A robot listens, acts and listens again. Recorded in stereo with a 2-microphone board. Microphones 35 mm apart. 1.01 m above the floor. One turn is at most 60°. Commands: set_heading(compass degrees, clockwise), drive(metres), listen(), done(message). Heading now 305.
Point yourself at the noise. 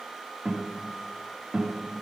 set_heading(335)
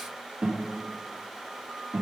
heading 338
set_heading(38)
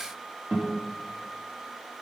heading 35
set_heading(90)
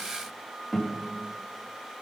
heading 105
set_heading(90)
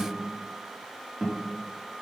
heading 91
done("Facing the guitar, 2 to 4 m away.")